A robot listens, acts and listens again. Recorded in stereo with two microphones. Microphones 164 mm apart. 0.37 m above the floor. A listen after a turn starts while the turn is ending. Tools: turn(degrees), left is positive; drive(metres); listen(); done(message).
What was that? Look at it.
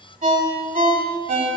turn(degrees=-55)
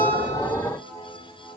listen()
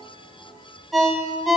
done("Found it: a ringtone, straight ahead.")